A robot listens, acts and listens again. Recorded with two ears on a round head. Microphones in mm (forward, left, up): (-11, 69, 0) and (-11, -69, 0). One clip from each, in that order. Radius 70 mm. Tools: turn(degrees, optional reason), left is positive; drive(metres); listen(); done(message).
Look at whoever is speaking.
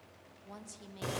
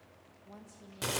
turn(degrees=55, reason="The woman speaking: about 55° left or 125° left.")
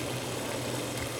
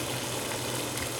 listen()
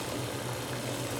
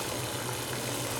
listen()
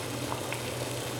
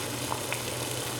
done("I heard a woman speaking, but can't make it out now. It was about straight ahead or 70° left.")